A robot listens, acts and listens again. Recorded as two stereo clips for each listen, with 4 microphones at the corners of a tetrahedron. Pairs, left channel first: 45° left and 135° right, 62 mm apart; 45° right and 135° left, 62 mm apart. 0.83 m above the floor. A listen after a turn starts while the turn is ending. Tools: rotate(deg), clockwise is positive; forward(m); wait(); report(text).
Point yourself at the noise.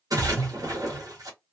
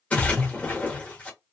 rotate(115)
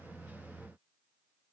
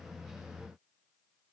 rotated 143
rotate(-30)
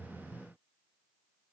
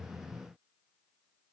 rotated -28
report("Facing where the splash came from. I can't hear it now.")